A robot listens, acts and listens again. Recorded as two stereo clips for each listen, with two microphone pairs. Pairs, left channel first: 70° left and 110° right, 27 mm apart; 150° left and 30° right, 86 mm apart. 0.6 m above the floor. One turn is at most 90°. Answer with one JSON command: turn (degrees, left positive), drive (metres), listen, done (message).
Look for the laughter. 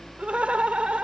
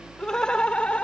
{"turn": -90}
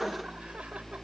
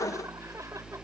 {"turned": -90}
{"turn": -45}
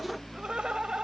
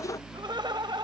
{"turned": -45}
{"turn": -55}
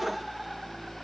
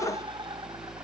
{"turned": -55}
{"turn": -25}
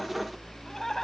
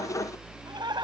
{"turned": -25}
{"done": "Found it: laughter, straight ahead."}